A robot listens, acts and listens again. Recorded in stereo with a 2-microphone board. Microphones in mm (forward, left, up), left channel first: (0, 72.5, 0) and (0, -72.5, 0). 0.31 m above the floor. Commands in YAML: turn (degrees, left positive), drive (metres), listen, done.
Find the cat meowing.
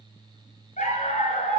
listen: true
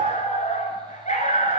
listen: true
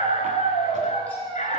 turn: 30
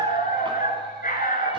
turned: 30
listen: true
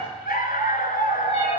listen: true
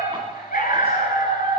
done: "I heard a cat meowing, but can't make it out now. It was about 20° right or 140° left."